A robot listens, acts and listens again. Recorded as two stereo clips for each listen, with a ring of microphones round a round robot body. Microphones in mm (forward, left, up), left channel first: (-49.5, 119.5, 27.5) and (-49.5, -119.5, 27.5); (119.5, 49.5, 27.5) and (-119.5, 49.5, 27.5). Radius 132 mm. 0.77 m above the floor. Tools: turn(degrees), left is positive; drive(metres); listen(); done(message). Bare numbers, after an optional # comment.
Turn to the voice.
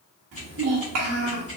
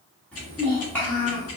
# The child speaking: 85° right.
turn(-85)
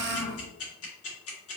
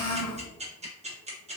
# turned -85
done("Facing the child speaking.")